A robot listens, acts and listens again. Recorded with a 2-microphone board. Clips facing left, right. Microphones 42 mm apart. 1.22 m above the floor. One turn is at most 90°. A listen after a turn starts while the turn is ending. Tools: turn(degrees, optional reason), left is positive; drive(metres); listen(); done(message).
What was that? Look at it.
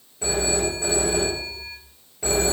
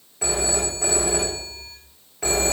turn(degrees=-90)
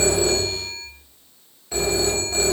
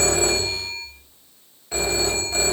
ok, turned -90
turn(degrees=-10, reason="So it is at 10° right.")
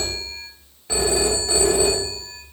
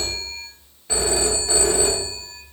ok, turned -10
done("Facing the phone ringing.")